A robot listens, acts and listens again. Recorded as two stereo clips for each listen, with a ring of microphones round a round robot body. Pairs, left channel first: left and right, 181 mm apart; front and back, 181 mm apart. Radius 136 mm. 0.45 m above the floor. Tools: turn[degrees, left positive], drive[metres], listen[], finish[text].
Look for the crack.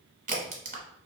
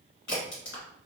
Thought: The crack: 45° right.
Action: turn[-45]
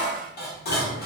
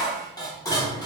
Action: finish[Facing where the crack came from. I can't hear it now.]